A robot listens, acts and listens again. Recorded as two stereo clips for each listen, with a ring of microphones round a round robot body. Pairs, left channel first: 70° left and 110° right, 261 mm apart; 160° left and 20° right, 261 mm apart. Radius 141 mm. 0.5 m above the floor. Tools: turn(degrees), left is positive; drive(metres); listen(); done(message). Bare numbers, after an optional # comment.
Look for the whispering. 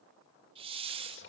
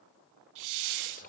# The whispering: 100° left.
turn(100)
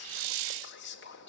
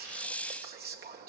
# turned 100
# The whispering is now 25° left.
turn(25)
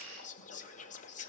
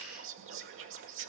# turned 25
# The whispering is now 10° left.
turn(10)
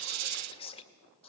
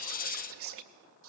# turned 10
done("Found it: whispering, straight ahead, 2 to 4 m away.")